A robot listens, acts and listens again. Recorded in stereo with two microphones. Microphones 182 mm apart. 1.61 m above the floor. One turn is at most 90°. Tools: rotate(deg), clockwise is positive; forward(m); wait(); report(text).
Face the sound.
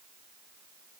wait()
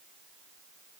wait()
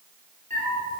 rotate(45)
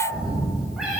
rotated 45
report("Found it: a cat meowing, straight ahead.")